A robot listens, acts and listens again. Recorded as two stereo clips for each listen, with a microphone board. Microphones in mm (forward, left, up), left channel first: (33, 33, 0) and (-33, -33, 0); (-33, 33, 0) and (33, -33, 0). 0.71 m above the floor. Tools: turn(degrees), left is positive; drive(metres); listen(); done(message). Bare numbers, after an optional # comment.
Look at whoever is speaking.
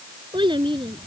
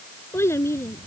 # The child speaking: 165° right.
turn(-165)
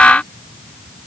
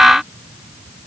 listen()
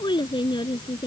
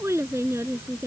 # The child speaking is now 15° left.
turn(15)
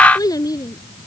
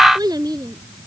done("Found it: a child speaking, straight ahead.")